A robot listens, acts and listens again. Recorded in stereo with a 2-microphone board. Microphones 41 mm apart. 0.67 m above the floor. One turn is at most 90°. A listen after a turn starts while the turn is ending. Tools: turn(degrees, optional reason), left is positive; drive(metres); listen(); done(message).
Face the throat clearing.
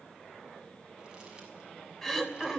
turn(degrees=30)
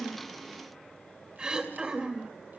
turn(degrees=-20, reason="So it is at 20° right.")
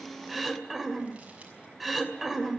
done("Found it: throat clearing, straight ahead, 2 to 4 m away.")